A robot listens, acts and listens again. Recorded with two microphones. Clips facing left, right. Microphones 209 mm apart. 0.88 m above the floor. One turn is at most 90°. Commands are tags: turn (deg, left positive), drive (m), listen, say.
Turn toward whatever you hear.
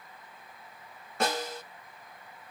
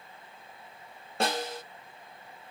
<turn deg="-30"/>
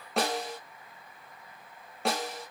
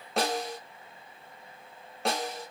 <say>Facing the snare drum.</say>